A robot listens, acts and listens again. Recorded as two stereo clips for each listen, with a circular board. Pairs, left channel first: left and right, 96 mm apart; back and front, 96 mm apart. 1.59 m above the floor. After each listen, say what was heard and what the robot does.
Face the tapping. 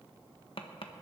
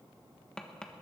The tapping: 100° left. Turn 100° left.
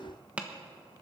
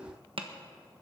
The tapping is now 15° right. Turn 15° right.
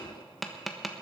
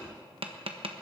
Facing the tapping, 1 to 2 m away.